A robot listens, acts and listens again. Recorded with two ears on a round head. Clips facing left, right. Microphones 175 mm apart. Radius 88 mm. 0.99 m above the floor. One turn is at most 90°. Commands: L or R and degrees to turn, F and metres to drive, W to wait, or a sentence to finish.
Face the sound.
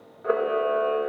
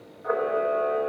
L45
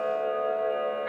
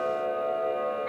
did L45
Facing the camera shutter.